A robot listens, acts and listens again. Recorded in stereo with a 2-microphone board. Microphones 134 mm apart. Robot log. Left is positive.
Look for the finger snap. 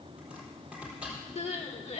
cmd idle
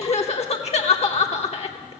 cmd idle
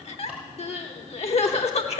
end: I can't make out a finger snap to turn to.